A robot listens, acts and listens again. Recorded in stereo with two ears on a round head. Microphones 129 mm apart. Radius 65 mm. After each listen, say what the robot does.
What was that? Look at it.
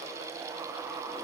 Keep listening.
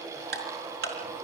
Turn 90° right.
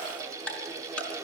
Turn 10° left.
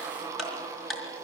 Facing the ticking, over 4 m away.